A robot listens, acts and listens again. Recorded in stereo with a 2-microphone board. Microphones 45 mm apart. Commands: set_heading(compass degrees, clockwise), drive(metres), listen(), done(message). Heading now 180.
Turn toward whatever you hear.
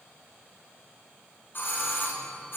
set_heading(120)
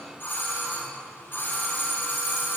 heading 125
set_heading(65)
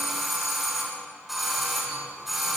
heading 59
done("Facing the doorbell.")